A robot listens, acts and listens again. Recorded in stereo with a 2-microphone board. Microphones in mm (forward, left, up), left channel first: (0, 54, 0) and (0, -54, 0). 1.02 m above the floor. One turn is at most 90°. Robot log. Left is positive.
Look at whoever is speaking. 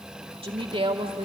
note: The woman speaking: about 60° right or 120° right.
cmd yaw -60
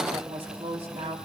note: So it is at 60° right.
cmd yaw -60
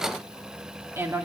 note: The woman speaking is now 20° right.
cmd yaw -20
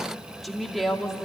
end: Found it: a woman speaking, straight ahead, 2 to 4 m away.